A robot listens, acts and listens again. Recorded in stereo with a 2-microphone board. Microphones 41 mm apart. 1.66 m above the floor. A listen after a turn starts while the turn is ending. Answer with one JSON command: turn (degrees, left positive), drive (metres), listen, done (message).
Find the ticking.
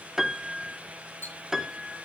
{"turn": 90}
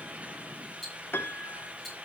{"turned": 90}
{"done": "Found it: ticking, straight ahead."}